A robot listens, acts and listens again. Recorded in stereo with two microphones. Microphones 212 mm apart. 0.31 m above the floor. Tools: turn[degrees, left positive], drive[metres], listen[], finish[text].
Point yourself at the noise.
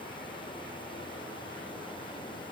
Action: listen[]
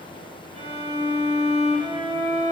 Thought: The violin: about 30° right or 150° right.
Action: turn[-30]
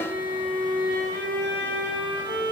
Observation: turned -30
Thought: So it is at 125° right.
Action: turn[-125]
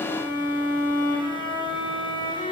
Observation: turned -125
Thought: The violin is now 25° left.
Action: turn[25]
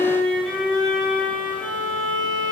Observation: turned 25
Action: finish[Found it: a violin, straight ahead, under 1 m away.]